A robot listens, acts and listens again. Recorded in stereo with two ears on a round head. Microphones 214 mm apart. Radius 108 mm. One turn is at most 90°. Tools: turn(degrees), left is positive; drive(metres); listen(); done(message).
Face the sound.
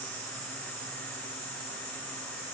listen()
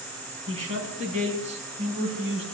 turn(degrees=-25)
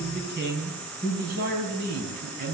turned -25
turn(degrees=-40)
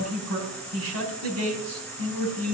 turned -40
turn(degrees=-90)
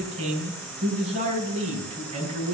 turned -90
turn(degrees=-25)
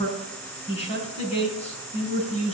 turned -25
turn(degrees=25)
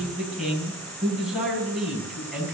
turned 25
done("Found it: a man speaking, straight ahead.")